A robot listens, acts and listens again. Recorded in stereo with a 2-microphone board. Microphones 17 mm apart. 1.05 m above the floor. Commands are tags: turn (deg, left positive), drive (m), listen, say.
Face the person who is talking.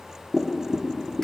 <listen/>
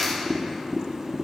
<listen/>
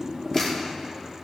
<say>I can't make out anyone speaking to turn to.</say>